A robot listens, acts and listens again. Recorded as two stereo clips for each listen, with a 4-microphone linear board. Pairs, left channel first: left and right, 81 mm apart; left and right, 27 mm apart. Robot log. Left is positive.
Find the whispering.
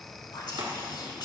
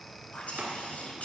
note: The whispering: about 60° left or 120° left.
cmd yaw +60
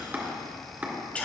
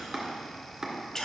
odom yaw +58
note: So it is at 20° left.
cmd yaw +20
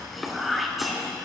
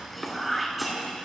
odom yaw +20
end: Facing the whispering.